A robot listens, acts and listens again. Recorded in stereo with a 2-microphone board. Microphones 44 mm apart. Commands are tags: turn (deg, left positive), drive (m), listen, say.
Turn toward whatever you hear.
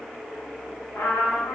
<turn deg="75"/>
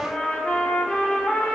<turn deg="25"/>
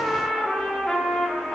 <say>Facing the trumpet, 1 to 2 m away.</say>